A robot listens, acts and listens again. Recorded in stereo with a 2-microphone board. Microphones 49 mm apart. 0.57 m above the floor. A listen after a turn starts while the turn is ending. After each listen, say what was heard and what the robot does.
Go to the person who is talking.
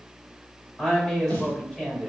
The woman speaking: about 15° left or 165° left. Turn 15° left.
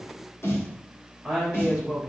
Drive 1.0 m forward.
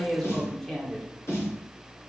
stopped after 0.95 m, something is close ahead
I am next to the woman speaking.